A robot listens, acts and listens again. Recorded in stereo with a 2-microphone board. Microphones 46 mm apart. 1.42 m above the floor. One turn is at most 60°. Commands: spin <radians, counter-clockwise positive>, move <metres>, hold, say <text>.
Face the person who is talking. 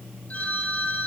hold
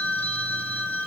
hold
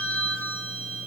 say I can't make out anyone speaking, only a phone ringing.